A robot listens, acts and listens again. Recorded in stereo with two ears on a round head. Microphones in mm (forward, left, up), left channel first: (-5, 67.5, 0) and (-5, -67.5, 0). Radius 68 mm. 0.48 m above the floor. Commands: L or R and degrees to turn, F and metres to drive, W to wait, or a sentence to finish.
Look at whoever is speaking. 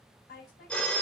L60
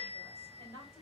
L20
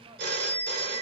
W
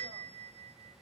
W
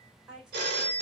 Found it: a woman speaking, straight ahead.